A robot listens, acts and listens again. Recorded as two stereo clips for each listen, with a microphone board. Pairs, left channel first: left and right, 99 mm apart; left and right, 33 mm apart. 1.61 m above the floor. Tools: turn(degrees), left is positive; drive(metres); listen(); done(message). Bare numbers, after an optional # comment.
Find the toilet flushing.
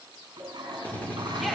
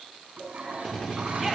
# The toilet flushing: about 50° right or 130° right.
turn(-50)
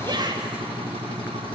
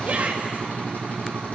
listen()
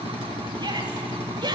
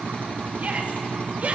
listen()
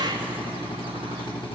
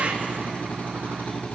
done("I heard a toilet flushing, but can't make it out now. It was about straight ahead or 80° right.")